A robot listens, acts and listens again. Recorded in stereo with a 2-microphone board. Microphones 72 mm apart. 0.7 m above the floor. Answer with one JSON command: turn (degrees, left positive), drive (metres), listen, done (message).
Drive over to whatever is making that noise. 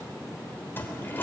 {"turn": 25}
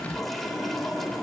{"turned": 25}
{"drive": 1.0}
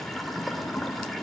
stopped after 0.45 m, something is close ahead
{"done": "Something is in my way. I am facing the toilet flushing but have not reached it."}